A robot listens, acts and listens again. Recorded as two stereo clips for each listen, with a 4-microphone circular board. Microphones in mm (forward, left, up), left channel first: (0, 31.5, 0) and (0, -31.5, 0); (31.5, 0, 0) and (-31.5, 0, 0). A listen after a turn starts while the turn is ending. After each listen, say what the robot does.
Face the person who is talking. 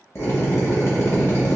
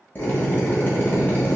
Keep listening.
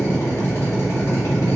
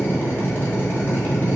Keep listening.
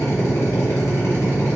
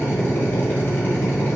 I can't make out anyone speaking, only a drill.